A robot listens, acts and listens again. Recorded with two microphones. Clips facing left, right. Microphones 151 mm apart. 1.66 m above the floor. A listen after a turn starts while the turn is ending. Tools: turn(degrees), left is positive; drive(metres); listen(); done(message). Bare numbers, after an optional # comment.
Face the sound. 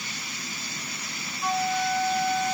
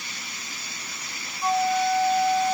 # The flute: about 35° right or 145° right.
turn(-35)
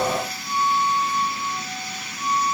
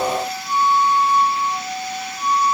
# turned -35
# So it is at 110° right.
turn(-110)
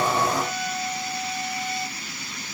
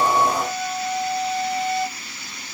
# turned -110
# The flute is now 50° right.
turn(-50)
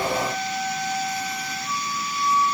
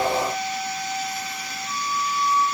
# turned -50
done("Facing the flute.")